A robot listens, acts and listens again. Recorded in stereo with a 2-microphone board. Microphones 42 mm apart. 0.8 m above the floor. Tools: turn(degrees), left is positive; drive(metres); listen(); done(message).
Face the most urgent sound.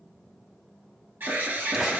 turn(degrees=-60)
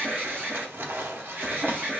turn(degrees=-55)
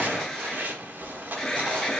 turn(degrees=10)
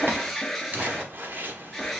done("Found it: an alarm, straight ahead, 1 to 2 m away.")